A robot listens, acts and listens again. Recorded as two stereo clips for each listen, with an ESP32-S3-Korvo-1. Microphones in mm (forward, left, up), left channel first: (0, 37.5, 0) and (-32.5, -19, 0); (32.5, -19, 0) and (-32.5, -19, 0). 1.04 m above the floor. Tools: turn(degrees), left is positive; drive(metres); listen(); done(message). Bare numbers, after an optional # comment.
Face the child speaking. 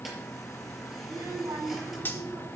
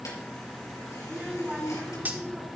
# The child speaking: 100° right.
turn(-100)
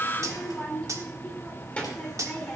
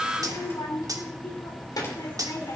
# The child speaking is now 15° right.
turn(-15)
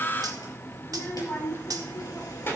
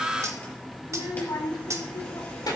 done("Facing the child speaking.")